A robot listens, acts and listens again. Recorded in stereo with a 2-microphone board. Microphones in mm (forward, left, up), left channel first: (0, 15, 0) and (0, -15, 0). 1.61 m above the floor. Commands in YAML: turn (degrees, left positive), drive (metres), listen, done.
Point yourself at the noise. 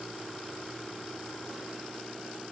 listen: true
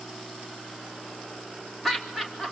turn: 30
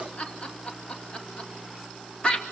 turn: 150
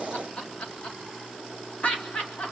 turn: 45
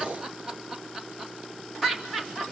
done: "Facing the laughter."